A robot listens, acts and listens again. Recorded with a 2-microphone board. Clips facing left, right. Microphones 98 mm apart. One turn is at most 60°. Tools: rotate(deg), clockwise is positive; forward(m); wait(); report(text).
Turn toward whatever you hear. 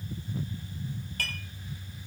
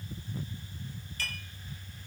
rotate(-55)
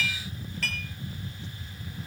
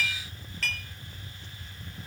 report("Found it: dishes clattering, straight ahead.")